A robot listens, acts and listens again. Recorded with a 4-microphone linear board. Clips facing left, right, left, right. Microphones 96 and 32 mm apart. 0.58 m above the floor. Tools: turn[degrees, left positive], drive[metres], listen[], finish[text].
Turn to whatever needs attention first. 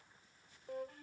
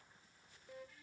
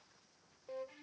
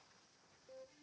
Action: listen[]
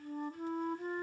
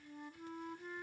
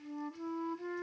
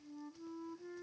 Action: listen[]
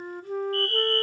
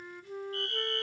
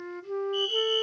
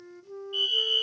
Thought: The fire alarm: about 20° right or 160° right.
Action: turn[-20]
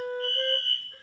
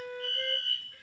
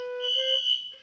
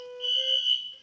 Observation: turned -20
Action: finish[Facing the fire alarm.]